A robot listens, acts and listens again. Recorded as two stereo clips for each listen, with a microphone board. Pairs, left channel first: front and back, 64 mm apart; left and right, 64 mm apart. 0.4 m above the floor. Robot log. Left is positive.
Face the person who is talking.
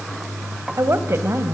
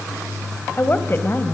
note: The woman speaking: 140° left.
cmd yaw +140
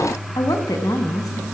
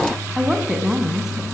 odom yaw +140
end: Facing the woman speaking, 2 to 4 m away.